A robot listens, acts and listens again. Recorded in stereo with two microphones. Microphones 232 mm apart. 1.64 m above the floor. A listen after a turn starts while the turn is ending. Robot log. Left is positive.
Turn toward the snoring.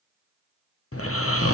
note: The snoring: about 75° left or 105° left.
cmd yaw +75
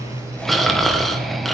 end: Found it: snoring, straight ahead.